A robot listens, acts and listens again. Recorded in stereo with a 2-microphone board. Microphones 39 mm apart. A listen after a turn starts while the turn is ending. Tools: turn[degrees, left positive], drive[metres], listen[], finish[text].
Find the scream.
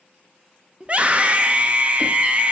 Thought: The scream: about 35° right or 145° right.
Action: turn[-35]
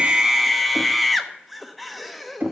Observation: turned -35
Action: finish[Found it: a scream, straight ahead, under 1 m away.]